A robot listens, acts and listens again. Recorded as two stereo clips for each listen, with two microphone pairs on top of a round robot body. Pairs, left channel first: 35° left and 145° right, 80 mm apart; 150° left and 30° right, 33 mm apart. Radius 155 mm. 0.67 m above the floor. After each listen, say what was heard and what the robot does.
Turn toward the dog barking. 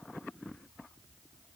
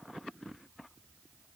Keep listening.
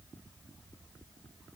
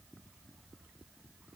Keep listening.
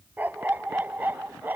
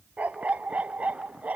The dog barking: 75° right. Turn 75° right.
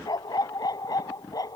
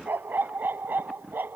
The dog barking is now 10° right. Turn 10° right.
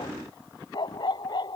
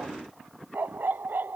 Found it: a dog barking, straight ahead.